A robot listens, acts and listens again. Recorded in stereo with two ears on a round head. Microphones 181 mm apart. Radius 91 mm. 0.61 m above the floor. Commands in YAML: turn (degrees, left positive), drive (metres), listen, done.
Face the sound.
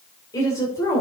turn: 30
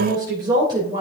turn: -25
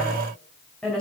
done: "Found it: a woman speaking, straight ahead, 2 to 4 m away."